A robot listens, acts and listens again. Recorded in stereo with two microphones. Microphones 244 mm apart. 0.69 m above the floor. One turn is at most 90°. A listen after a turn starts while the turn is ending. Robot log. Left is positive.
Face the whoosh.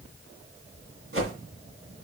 note: The whoosh: about 60° right or 120° right.
cmd yaw -60
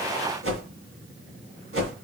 note: So it is at 60° right.
cmd yaw -60
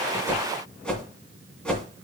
end: Found it: a whoosh, straight ahead, 2 to 4 m away.